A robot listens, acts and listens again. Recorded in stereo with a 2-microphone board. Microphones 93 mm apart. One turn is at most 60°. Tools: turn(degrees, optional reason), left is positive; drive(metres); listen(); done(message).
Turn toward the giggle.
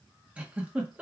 turn(degrees=-30)
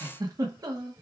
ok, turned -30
turn(degrees=-60, reason="So it is at 140° right.")
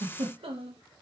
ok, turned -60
turn(degrees=-60, reason="The giggle is now 80° right.")
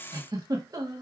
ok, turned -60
turn(degrees=-40, reason="The giggle is now 40° right.")
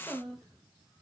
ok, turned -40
done("Found it: a giggle, straight ahead, under 1 m away.")